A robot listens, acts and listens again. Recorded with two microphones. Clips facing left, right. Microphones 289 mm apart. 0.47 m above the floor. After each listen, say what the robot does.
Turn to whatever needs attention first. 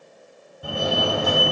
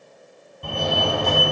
Turn 30° left.
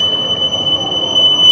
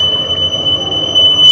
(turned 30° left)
Turn 20° right.
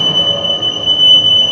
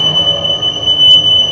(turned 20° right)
Found it: a fire alarm, straight ahead.